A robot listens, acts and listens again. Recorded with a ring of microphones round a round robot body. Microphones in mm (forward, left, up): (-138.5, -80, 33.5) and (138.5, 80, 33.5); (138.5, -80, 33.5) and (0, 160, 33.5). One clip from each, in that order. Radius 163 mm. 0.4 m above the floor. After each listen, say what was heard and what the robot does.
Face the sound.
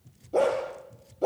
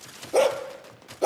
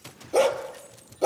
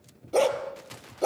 The dog barking: 20° left. Turn 20° left.
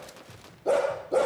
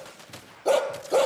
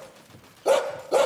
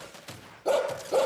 Facing the dog barking, 2 to 4 m away.